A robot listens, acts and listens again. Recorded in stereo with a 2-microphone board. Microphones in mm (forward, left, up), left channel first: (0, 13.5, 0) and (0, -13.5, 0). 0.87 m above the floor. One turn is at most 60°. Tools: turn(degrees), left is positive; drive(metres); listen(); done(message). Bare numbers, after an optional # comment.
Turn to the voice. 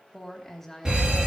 turn(30)
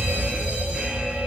listen()
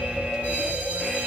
listen()
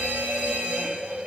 done("I heard a woman speaking, but can't make it out now. It was about 20° right or 140° left.")